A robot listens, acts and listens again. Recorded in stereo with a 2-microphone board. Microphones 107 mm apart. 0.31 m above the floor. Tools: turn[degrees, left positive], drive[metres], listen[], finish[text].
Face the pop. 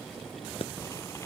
Thought: The pop: about 60° left or 120° left.
Action: turn[60]
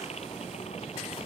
Action: listen[]
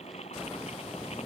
Action: finish[I heard a pop, but can't make it out now. It was about straight ahead or 60° left.]